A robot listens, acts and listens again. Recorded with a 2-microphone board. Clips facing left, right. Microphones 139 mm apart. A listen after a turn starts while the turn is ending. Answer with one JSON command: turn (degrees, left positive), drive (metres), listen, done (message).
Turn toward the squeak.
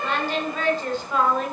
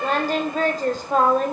{"listen": true}
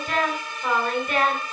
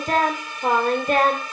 {"listen": true}
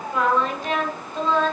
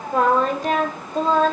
{"done": "I can't make out a squeak, only singing."}